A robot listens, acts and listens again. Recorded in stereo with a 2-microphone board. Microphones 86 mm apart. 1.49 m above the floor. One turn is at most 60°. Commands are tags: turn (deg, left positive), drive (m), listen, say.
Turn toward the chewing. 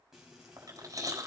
<turn deg="-40"/>
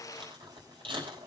<turn deg="-60"/>
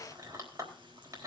<turn deg="-40"/>
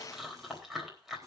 <say>Found it: chewing, straight ahead.</say>